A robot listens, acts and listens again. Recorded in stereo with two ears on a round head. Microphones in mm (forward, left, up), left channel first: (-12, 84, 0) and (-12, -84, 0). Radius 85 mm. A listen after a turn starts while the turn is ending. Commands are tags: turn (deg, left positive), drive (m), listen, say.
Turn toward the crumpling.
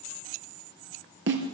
<listen/>
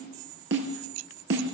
<listen/>
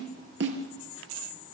<say>I can't make out crumpling to turn to.</say>